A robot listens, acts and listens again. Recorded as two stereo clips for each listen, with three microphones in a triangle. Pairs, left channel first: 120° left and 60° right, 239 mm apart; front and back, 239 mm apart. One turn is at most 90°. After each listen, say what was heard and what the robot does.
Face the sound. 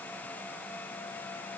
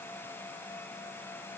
Keep listening.
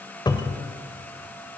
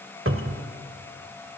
The cupboard door: 170° right. Turn 90° right.
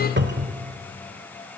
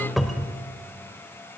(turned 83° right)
The cupboard door is now 90° right. Turn 90° right.
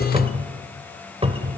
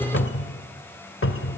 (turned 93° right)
Facing the cupboard door.